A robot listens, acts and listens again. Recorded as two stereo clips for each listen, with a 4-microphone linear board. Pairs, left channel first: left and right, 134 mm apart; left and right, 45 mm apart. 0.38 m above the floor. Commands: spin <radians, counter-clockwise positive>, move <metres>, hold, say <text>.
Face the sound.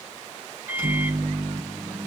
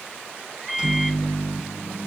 spin -0.26
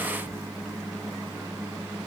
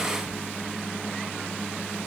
say Found it: a microwave, straight ahead, 2 to 4 m away.